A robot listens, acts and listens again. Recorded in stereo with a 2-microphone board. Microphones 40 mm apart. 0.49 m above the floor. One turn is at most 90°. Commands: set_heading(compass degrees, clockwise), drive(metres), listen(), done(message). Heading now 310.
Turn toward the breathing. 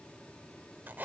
listen()
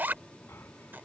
set_heading(240)
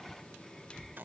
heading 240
done("Found it: breathing, straight ahead.")